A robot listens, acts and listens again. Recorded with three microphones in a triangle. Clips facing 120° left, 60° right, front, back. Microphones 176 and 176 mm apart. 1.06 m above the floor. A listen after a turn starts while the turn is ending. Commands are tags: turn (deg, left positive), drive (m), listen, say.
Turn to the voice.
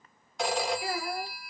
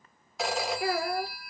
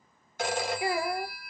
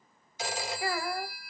<turn deg="-75"/>
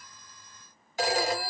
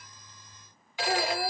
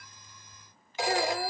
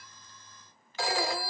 <listen/>
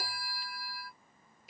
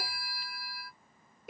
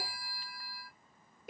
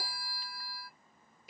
<turn deg="-30"/>
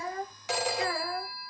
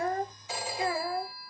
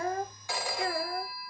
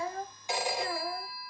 <turn deg="10"/>
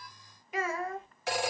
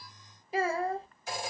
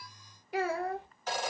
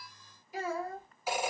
<say>Facing the child speaking.</say>